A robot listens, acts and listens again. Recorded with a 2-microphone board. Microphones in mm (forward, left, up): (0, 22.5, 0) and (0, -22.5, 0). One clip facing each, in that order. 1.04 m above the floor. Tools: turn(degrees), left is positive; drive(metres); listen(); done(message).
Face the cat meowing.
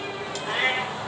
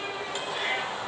turn(degrees=65)
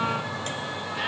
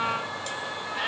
listen()
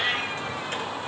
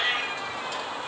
done("Facing the cat meowing, over 4 m away.")